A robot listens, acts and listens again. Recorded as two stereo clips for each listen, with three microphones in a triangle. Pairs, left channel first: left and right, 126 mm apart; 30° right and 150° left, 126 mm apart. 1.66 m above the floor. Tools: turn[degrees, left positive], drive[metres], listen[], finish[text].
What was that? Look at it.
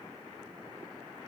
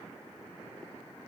Action: listen[]
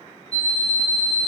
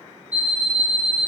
Thought: The alarm clock: 75° left.
Action: turn[75]
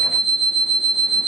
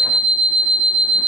Thought: The alarm clock is now 10° left.
Action: turn[10]
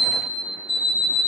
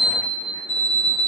Action: finish[Facing the alarm clock, 1 to 2 m away.]